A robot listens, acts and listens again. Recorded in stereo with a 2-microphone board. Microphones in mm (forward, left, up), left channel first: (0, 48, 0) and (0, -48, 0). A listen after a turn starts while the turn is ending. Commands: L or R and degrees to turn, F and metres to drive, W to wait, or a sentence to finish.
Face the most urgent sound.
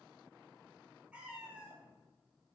W
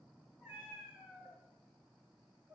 W
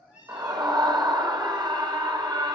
R45
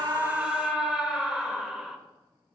Facing the scream.